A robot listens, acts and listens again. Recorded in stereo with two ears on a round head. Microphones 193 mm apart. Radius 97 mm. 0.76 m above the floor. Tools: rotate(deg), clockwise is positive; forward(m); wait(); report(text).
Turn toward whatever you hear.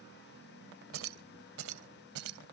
rotate(90)
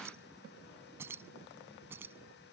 rotate(10)
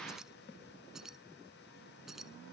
report("Found it: keys jangling, straight ahead.")